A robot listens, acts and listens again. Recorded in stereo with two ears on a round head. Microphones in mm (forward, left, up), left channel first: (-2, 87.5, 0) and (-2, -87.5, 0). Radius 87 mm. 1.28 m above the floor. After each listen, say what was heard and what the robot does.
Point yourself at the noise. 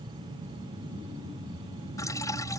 The dripping: about 15° left or 165° left. Turn 15° left.
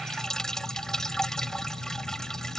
Facing the dripping.